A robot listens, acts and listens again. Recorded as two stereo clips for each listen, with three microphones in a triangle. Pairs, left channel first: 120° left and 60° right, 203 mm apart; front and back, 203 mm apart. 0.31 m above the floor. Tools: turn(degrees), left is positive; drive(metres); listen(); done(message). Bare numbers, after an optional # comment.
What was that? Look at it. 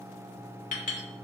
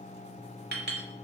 # The clink: 160° left.
turn(160)
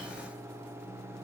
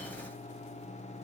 listen()
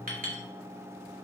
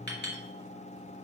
# The clink is now 20° right.
turn(-20)
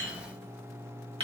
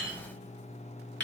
done("Facing the clink.")